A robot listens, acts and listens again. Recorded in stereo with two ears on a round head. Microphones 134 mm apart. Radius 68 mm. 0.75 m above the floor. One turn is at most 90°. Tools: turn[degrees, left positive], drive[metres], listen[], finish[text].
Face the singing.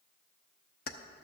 Action: listen[]
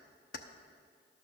Action: listen[]
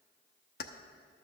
Action: finish[I can't make out singing to turn to.]